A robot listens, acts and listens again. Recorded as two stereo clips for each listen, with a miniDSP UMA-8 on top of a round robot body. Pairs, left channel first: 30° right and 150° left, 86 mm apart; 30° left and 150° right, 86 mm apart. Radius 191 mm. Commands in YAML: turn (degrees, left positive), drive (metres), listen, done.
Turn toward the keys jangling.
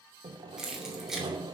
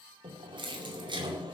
turn: -125
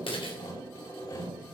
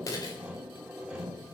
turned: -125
turn: -15
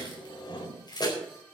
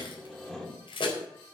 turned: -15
turn: 10
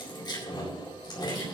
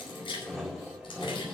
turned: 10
turn: 10
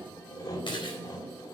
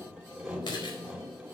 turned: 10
done: "Found it: keys jangling, straight ahead, over 4 m away."